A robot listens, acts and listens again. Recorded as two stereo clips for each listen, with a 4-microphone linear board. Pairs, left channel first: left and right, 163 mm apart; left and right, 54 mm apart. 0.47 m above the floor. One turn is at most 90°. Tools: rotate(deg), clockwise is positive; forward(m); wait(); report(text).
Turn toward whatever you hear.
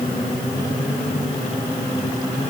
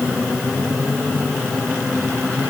wait()
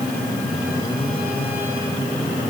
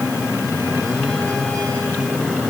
wait()
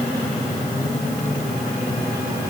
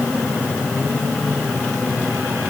report("I can't make out anything to turn to.")